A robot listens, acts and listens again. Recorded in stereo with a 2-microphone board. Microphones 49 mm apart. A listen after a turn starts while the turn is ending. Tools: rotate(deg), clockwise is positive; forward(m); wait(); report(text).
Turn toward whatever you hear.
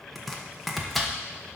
rotate(-30)
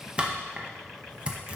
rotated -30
rotate(25)
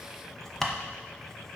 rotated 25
rotate(-10)
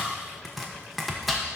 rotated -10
report("Found it: chopping, straight ahead, 1 to 2 m away.")